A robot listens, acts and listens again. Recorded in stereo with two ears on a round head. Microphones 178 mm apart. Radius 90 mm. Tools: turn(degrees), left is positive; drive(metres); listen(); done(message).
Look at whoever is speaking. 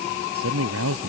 turn(degrees=-90)
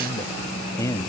turn(degrees=15)
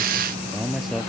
done("Facing the man speaking.")